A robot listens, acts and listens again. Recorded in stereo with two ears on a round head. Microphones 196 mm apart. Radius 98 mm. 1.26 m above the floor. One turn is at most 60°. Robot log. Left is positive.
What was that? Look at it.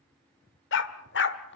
note: The dog barking: about 55° left or 125° left.
cmd yaw +55
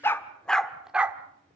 end: Found it: a dog barking, straight ahead.